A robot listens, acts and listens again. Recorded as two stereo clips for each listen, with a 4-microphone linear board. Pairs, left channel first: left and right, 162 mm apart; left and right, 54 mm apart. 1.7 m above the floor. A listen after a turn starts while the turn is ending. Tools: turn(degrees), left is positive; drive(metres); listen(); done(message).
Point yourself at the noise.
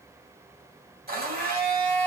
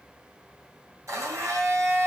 turn(degrees=-70)
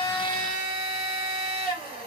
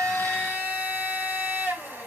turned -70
turn(degrees=-35)
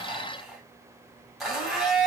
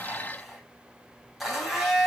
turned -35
done("Found it: a blender, straight ahead, 2 to 4 m away.")